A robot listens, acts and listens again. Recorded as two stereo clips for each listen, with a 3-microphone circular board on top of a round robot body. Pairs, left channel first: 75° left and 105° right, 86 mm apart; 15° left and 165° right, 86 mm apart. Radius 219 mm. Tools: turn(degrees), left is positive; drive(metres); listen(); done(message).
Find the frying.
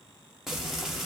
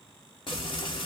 turn(degrees=-20)
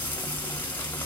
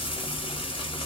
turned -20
done("Found it: frying, straight ahead.")